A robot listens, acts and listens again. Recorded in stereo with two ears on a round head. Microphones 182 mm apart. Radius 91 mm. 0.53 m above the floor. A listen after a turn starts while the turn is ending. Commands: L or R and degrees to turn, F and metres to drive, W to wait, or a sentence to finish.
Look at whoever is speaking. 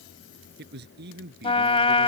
R55
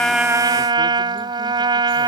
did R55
W
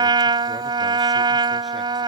W
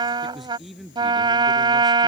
Facing the man speaking.